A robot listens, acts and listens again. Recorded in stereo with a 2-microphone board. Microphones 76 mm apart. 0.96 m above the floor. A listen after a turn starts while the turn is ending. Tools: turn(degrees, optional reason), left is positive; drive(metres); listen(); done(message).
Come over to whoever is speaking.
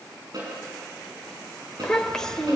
turn(degrees=30)
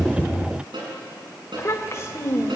turn(degrees=140, reason="So it is at 140° left.")
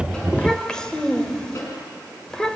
turn(degrees=10, reason="The child speaking is now 10° left.")
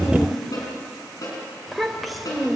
drive(metres=1.0)
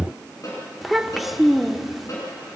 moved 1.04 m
drive(metres=1.0)
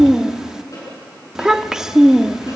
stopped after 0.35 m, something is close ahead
done("I am next to the child speaking.")